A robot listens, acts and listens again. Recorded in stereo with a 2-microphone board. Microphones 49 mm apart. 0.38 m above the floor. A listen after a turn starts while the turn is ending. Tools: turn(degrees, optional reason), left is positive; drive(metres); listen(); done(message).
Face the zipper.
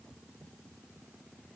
listen()
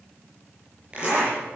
turn(degrees=-25, reason="The zipper: about 25° right or 155° right.")
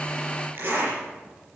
turn(degrees=-130, reason="So it is at 130° right.")
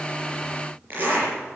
turn(degrees=-40, reason="The zipper is now 40° right.")
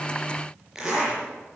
turn(degrees=-10, reason="The zipper is now 10° right.")
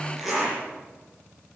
done("Facing the zipper, over 4 m away.")